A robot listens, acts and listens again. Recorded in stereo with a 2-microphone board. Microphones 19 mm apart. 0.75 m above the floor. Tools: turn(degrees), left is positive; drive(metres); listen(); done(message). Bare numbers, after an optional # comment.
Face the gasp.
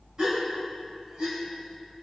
# The gasp: about 40° right or 140° right.
turn(-40)
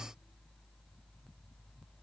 listen()
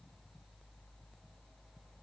done("I heard a gasp, but can't make it out now. It was about straight ahead or 100° right.")